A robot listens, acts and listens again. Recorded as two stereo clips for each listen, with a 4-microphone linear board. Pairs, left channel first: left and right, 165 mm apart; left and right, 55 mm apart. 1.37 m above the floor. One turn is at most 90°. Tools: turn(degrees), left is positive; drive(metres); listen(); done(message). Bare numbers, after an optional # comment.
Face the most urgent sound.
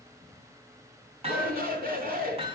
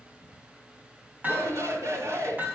# The shout: about 70° right or 110° right.
turn(-70)
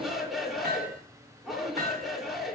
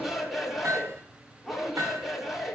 done("Found it: a shout, straight ahead.")